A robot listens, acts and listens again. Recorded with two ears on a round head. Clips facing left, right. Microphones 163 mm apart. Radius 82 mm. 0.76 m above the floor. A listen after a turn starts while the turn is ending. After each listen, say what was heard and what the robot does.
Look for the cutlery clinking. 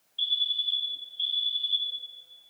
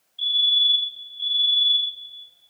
Keep listening.
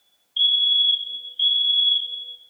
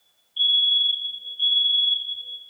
Keep listening.
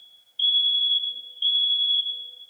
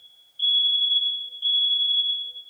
I can't make out cutlery clinking, only a fire alarm.